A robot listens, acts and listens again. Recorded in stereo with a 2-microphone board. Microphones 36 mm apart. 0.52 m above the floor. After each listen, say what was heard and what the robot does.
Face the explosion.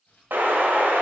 Turn 90° right.
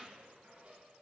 I heard an explosion from this way, but can't make it out now.